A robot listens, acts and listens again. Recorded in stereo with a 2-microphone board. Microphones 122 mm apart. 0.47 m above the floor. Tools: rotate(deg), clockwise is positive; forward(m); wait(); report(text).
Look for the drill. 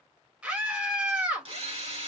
rotate(55)
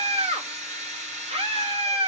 rotate(70)
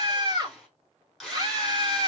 report("Found it: a drill, straight ahead.")